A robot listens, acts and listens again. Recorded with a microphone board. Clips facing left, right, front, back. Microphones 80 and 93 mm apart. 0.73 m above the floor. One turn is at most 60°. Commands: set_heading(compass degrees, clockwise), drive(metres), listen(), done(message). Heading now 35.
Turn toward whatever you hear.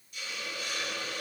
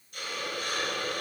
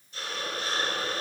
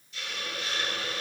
set_heading(90)
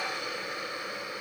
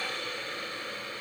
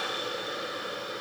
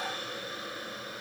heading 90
set_heading(75)
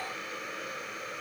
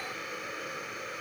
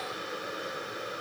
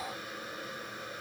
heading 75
done("Found it: a hiss, straight ahead, 1 to 2 m away.")